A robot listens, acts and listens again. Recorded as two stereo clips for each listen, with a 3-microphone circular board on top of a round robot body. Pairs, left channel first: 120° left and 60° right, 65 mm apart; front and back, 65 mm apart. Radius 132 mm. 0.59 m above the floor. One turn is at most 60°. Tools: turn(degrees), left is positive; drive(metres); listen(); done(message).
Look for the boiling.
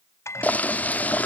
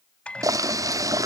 turn(degrees=60)
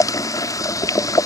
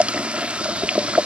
turn(degrees=60)
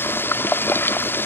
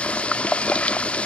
turn(degrees=60)
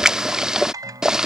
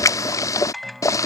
turn(degrees=20)
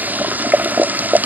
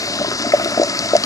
done("Found it: boiling, straight ahead.")